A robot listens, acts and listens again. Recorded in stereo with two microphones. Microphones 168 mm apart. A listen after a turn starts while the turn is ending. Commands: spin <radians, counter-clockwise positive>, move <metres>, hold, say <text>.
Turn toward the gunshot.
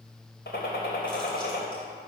spin 1.57
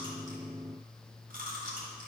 say I heard a gunshot from this way, but can't make it out now.